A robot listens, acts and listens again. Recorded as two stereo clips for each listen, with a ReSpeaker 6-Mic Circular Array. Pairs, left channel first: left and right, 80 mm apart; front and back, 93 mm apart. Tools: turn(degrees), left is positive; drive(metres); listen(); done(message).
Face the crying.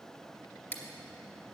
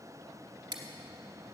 listen()
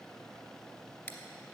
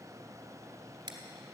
listen()
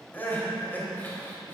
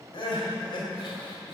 turn(degrees=25)
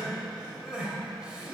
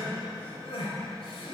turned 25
turn(degrees=-10)
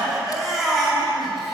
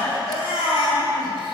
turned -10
done("Found it: crying, straight ahead, 2 to 4 m away.")